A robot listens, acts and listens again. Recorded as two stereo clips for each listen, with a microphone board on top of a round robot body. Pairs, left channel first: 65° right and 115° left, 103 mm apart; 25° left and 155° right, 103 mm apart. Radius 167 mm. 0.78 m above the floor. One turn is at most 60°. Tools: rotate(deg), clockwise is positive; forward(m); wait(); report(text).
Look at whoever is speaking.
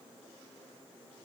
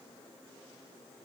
wait()
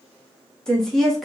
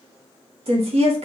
rotate(60)
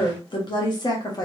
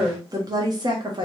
rotate(60)
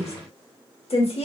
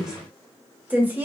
rotate(60)
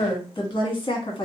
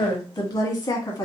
rotate(25)
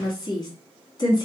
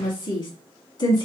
rotate(20)
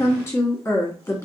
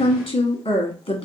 report("Found it: a woman speaking, straight ahead.")